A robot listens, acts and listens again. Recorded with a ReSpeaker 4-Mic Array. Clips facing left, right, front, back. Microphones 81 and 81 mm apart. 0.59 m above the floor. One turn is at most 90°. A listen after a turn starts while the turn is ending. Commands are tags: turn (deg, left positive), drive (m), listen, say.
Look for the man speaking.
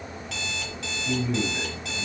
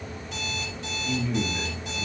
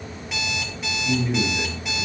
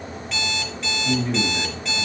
<turn deg="90"/>
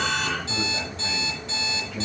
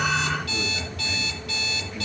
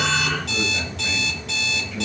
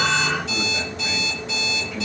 <turn deg="70"/>
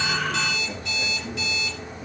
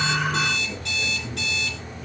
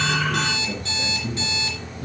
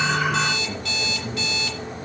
<listen/>
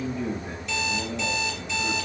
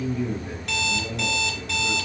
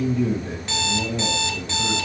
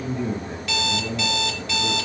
<turn deg="20"/>
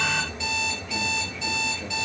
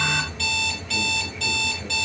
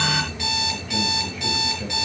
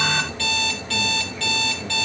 <listen/>
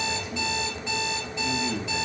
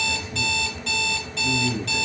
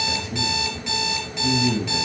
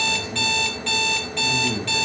<say>Found it: a man speaking, straight ahead, 2 to 4 m away.</say>